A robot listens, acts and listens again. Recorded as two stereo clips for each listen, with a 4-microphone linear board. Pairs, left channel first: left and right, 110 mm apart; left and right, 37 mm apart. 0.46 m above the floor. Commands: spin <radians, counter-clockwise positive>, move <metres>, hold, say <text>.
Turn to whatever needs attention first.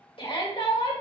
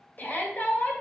spin 0.96
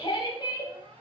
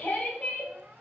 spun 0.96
spin 0.87
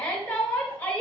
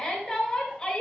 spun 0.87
spin 0.35
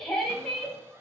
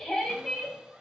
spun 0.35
say Found it: a shout, straight ahead.